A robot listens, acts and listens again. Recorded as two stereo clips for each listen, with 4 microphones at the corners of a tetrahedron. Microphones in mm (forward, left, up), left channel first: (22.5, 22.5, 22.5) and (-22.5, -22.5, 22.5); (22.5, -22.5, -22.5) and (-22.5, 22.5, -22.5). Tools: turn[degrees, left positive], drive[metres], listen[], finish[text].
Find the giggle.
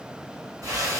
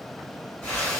Action: listen[]
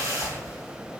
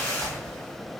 Action: listen[]
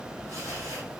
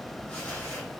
Action: finish[I can't make out a giggle, only a whoosh.]